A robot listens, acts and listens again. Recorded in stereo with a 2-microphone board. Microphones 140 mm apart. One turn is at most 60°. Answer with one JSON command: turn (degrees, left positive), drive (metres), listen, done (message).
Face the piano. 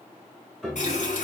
{"turn": 30}
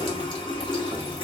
{"listen": true}
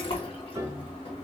{"turn": -25}
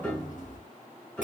{"turn": 15}
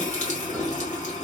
{"listen": true}
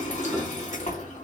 {"listen": true}
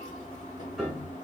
{"done": "Found it: a piano, straight ahead, 1 to 2 m away."}